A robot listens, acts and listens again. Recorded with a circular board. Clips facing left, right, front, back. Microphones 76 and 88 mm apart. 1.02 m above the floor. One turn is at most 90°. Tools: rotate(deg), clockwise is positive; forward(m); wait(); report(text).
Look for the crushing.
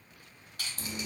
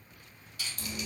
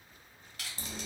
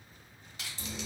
rotate(-90)
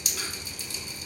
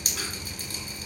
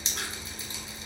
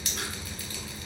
rotate(-25)
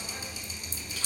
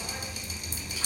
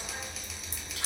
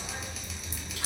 wait()
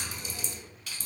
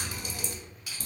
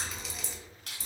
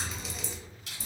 rotate(15)
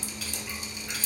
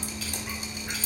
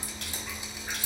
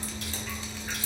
wait()
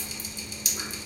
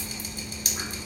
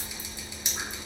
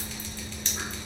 wait()
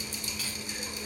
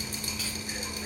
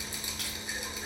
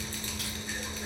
report("Facing where the crushing came from. I can't hear it now.")